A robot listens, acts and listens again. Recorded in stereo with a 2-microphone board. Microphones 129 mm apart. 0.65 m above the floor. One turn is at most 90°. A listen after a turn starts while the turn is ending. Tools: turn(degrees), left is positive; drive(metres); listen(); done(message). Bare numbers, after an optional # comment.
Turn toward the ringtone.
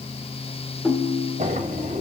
turn(-30)
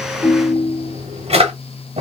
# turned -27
# So it is at 20° left.
turn(20)
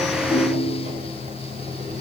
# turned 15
listen()
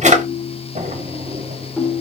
done("Facing the ringtone.")